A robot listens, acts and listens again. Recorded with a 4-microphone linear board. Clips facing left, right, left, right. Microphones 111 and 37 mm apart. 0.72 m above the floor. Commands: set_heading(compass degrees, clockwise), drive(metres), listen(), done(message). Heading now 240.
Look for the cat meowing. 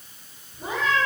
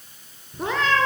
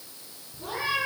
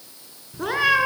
set_heading(310)
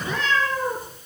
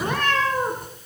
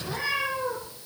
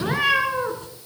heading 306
set_heading(1)
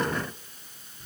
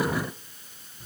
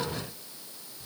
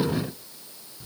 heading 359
listen()
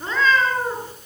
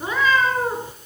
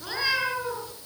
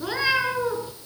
set_heading(14)
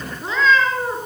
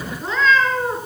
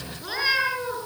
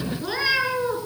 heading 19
done("Found it: a cat meowing, straight ahead.")